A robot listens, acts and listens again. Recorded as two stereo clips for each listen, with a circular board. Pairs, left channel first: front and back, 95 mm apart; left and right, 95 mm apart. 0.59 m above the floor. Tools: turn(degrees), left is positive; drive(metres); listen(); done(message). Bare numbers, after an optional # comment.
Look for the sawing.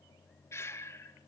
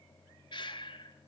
listen()
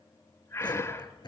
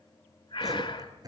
# The sawing: 40° right.
turn(-40)
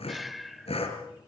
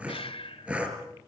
# The sawing is now 10° right.
turn(-10)
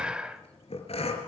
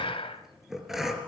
done("Found it: sawing, straight ahead, 2 to 4 m away.")